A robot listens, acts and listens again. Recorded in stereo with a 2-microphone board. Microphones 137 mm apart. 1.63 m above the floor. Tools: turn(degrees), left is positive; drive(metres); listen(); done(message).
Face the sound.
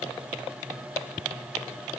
listen()
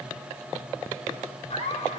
turn(degrees=50)
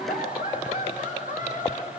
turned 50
turn(degrees=80)
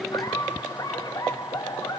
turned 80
turn(degrees=30)
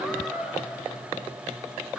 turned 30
done("Found it: laughter, straight ahead.")